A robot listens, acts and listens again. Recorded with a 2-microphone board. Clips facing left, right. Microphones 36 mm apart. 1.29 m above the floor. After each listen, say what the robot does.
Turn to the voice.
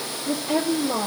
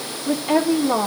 Turn 65° right.
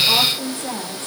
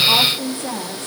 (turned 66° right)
Found it: a woman speaking, straight ahead.